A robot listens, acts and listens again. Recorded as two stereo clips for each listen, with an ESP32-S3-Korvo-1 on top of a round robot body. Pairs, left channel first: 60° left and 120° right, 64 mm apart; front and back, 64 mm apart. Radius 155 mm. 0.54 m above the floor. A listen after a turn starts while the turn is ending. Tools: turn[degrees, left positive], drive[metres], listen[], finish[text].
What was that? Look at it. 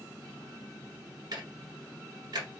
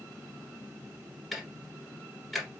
Thought: The ticking: 90° right.
Action: turn[-90]
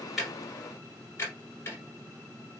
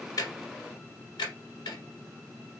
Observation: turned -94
Action: finish[Facing the ticking, 1 to 2 m away.]